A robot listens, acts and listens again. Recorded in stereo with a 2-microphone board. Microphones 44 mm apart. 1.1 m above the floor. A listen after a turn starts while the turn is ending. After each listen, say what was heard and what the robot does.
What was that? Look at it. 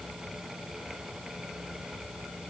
Keep listening.
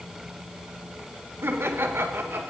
The laughter: about 65° right or 115° right. Turn 65° right.
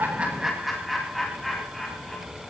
Found it: laughter, straight ahead.